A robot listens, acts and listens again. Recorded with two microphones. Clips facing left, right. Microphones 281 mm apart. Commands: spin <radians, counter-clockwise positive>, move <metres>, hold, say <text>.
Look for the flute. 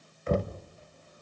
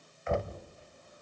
hold
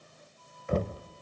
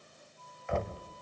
spin 0.61
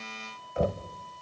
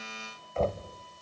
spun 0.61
spin 1.92
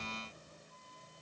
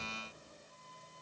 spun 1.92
say Facing the flute.